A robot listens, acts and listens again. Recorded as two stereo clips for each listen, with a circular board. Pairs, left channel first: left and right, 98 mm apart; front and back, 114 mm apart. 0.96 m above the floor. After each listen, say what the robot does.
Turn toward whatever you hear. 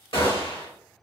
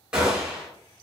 Turn 100° left.
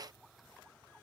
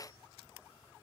I heard a gunshot from this way, but can't make it out now.